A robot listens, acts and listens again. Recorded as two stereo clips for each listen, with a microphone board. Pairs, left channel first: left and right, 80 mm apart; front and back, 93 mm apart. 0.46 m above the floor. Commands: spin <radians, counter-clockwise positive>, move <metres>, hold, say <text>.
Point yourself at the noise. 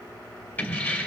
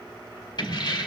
spin 0.44
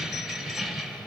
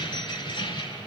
say Facing the keys jangling.